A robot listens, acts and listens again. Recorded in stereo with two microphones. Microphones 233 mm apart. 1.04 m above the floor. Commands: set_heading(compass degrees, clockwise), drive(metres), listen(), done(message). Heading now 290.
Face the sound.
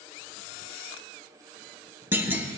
set_heading(320)
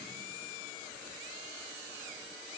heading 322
listen()
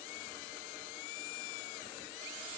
done("I heard a clunk, but can't make it out now. It was about 25° left or 140° right.")